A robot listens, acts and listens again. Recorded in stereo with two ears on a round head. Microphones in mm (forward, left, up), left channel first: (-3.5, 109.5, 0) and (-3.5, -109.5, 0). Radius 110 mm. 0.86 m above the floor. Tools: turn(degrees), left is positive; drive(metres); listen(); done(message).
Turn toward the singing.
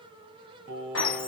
turn(degrees=-45)
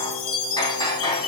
listen()
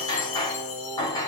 done("Found it: singing, straight ahead, 2 to 4 m away.")